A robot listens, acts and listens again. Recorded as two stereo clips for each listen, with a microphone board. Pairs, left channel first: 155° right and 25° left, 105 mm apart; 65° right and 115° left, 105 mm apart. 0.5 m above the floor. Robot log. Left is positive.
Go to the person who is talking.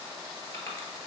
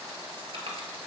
cmd idle
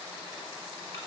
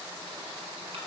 cmd idle
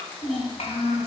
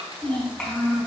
note: The child speaking: 150° right.
cmd yaw -150
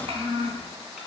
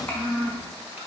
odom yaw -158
note: The child speaking is now 10° left.
cmd yaw +10
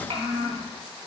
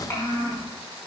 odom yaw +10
cmd fwd 1.0
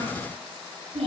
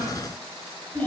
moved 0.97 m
cmd fwd 1.0
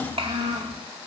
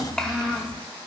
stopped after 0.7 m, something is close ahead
note: The child speaking is now 15° left.
cmd yaw +15
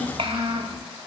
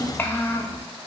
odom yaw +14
end: I am next to the child speaking.